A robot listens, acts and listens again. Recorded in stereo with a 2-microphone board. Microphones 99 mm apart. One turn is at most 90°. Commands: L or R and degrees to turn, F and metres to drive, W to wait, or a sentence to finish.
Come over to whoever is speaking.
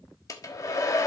W
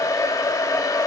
W
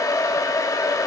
I can't make out anyone speaking to turn to.